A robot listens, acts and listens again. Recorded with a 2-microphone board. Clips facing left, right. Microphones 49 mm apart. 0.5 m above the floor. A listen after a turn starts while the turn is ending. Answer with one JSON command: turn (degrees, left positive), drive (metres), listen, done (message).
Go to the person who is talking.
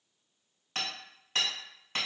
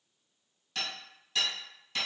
{"listen": true}
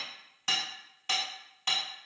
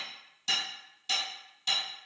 {"listen": true}
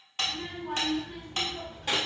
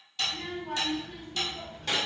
{"turn": 30}
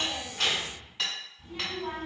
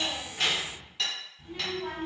{"turn": -20}
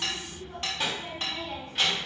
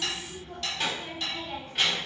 {"drive": 1.0}
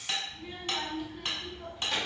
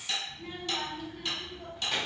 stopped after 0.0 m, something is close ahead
{"done": "Something is in my way. I am facing the child speaking but have not reached it."}